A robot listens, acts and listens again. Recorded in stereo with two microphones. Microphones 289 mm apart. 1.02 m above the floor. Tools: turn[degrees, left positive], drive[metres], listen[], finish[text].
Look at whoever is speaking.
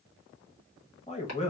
Thought: The man speaking: about 20° left or 160° left.
Action: turn[20]
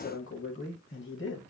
Thought: So it is at 135° left.
Action: turn[135]
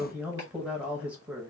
Action: finish[Found it: a man speaking, straight ahead.]